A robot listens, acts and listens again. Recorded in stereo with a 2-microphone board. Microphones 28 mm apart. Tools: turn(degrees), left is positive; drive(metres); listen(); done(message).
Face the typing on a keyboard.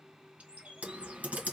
turn(degrees=-70)
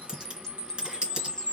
turn(degrees=-40)
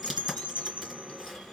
done("Facing the typing on a keyboard, 2 to 4 m away.")